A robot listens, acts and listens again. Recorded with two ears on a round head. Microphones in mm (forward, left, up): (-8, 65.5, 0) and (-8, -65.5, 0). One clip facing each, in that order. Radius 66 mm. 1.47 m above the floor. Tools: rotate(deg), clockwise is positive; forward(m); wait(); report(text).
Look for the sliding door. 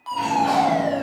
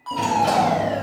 rotate(60)
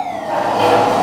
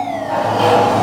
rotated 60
report("Facing the sliding door.")